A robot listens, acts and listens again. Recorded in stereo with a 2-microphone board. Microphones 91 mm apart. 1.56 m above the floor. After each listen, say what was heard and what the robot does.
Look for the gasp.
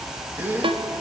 The gasp: about 20° right or 160° right. Turn 20° right.
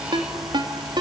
Keep listening.
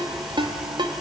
I heard a gasp, but can't make it out now. It was about straight ahead or 140° right.